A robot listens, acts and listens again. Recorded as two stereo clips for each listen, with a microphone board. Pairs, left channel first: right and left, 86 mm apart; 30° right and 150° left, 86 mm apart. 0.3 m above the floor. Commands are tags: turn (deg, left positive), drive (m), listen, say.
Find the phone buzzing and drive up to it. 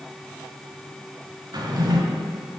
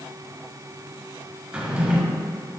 <listen/>
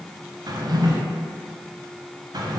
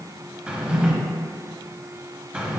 <listen/>
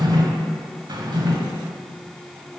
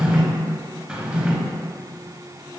<say>I can't make out a phone buzzing to turn to.</say>